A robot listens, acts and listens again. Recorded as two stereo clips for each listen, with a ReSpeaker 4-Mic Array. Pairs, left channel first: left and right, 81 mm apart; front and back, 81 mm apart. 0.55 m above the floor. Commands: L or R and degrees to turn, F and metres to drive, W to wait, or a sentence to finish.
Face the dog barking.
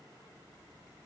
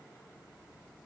W
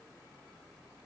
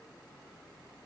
W
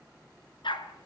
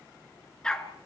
L80
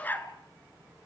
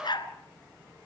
L20
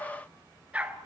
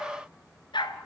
R15
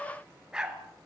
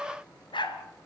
R10
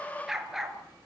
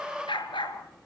Facing the dog barking, 2 to 4 m away.